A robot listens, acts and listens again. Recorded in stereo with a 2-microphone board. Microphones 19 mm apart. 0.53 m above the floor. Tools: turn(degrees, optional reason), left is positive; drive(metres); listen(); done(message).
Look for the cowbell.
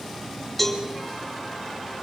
turn(degrees=-30)
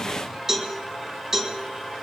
turn(degrees=-150, reason="So it is at 150° right.")
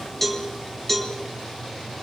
turn(degrees=20, reason="The cowbell is now 20° left.")
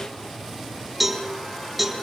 done("Facing the cowbell.")